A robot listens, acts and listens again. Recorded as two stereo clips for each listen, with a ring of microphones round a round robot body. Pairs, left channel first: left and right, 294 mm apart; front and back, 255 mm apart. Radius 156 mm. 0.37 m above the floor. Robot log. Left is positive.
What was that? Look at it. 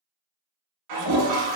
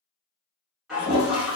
note: The toilet flushing: 90° right.
cmd yaw -90
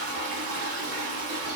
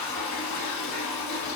note: The toilet flushing is now 35° right.
cmd yaw -35
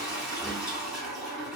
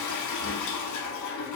end: Found it: a toilet flushing, straight ahead.